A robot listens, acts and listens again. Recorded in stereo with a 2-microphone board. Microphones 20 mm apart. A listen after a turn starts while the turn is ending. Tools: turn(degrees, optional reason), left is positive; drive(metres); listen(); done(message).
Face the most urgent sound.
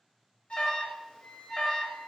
turn(degrees=50, reason="The alarm: about 50° left or 130° left.")
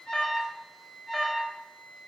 turn(degrees=10, reason="So it is at 10° left.")
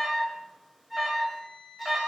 done("Found it: an alarm, straight ahead.")